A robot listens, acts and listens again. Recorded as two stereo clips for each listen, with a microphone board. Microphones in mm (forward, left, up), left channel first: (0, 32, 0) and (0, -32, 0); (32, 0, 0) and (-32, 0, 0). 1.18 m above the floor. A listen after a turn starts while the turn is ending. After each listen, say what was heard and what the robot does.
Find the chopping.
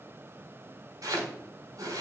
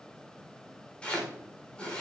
The chopping: 75° right. Turn 75° right.
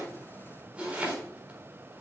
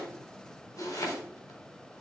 The chopping is now 20° right. Turn 20° right.
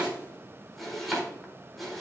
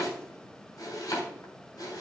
Facing the chopping, 2 to 4 m away.